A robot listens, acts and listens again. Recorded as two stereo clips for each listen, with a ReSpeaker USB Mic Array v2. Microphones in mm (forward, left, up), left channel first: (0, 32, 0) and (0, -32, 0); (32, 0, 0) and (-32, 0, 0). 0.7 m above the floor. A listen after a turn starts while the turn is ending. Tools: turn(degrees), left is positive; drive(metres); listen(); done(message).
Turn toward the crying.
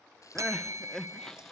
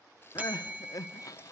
turn(degrees=10)
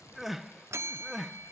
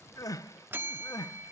done("Facing the crying.")